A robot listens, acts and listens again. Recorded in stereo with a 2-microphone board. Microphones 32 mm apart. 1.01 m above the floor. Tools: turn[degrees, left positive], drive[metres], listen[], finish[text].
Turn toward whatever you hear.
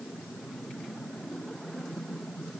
Action: listen[]
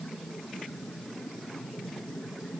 Action: listen[]
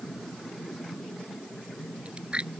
Thought: The chewing: about 45° right or 135° right.
Action: turn[-45]
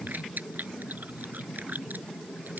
Thought: So it is at 90° right.
Action: turn[-90]
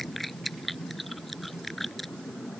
Thought: The chewing is now 10° left.
Action: turn[10]
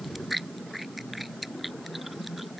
Action: finish[Found it: chewing, straight ahead.]